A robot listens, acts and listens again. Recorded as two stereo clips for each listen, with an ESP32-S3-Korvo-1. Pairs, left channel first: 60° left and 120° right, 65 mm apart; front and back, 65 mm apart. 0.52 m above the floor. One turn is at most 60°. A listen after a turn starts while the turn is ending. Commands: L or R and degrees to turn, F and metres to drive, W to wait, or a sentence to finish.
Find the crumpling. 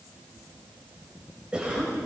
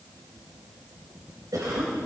W
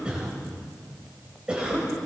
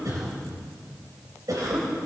W
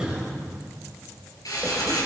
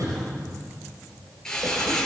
L60
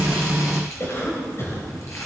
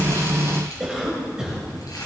L15
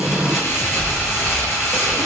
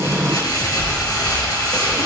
Found it: crumpling, straight ahead, over 4 m away.